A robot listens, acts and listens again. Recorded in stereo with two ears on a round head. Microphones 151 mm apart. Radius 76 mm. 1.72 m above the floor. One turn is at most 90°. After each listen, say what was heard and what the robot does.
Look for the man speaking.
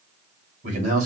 The man speaking: about 45° right or 135° right. Turn 45° right.
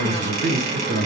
So it is at 85° right. Turn 85° right.
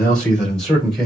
Facing the man speaking, 2 to 4 m away.